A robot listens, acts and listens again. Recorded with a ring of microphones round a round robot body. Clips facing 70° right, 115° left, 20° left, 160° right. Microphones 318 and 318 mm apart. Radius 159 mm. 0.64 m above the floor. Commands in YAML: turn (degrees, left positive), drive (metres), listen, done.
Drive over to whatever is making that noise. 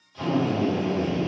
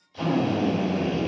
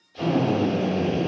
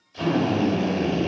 turn: 135
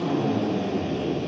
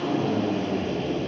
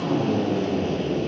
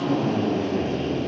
turn: 25
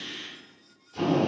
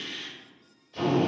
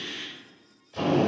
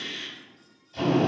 turn: 10
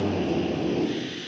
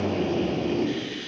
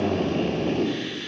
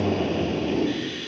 drive: 1.0
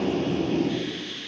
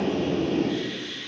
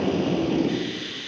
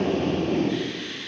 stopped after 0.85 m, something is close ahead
done: "Arrived at the drill, straight ahead."